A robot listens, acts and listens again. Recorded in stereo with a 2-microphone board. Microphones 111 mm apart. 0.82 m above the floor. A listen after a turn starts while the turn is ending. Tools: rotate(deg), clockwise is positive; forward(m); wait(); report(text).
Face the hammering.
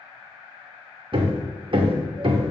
rotate(50)
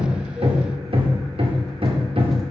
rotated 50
rotate(70)
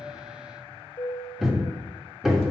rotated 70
report("Found it: hammering, straight ahead.")